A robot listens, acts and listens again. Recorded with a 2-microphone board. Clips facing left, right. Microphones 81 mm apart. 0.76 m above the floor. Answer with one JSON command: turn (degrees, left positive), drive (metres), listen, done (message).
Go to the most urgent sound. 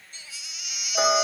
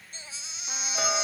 {"turn": -35}
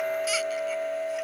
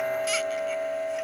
{"listen": true}
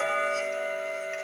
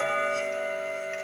{"listen": true}
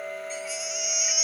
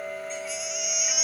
{"drive": 1.0}
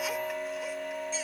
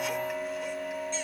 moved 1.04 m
{"listen": true}
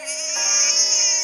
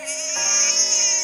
{"drive": 1.0}
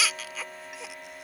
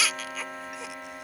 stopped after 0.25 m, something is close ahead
{"done": "I am next to the baby crying."}